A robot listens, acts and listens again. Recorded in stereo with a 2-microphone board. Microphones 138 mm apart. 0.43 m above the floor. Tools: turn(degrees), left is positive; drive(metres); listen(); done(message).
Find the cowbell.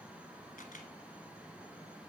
listen()
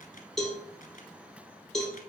turn(degrees=30)
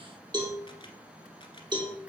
turn(degrees=-30)
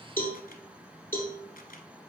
turn(degrees=15)
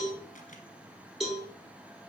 done("Found it: a cowbell, straight ahead, 2 to 4 m away.")